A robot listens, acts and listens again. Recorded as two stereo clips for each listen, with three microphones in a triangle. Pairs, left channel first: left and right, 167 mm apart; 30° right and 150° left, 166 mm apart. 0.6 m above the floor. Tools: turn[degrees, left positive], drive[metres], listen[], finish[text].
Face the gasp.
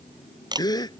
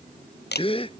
Thought: The gasp: 25° left.
Action: turn[25]
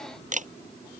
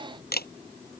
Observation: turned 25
Action: finish[I heard a gasp from this way, but can't make it out now.]